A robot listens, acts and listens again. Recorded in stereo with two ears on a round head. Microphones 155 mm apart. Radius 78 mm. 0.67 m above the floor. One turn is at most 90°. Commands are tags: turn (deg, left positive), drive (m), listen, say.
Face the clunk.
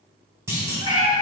<turn deg="-15"/>
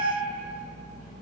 <listen/>
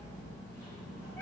<say>I heard a clunk, but can't make it out now. It was about straight ahead or 150° right.</say>